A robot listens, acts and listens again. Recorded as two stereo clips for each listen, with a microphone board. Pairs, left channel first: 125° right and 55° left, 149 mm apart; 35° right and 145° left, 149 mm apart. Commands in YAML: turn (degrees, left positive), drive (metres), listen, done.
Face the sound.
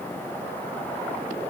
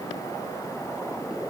listen: true
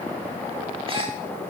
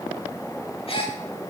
turn: 10
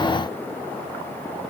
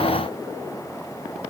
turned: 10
done: "Facing where the gasp came from. I can't hear it now."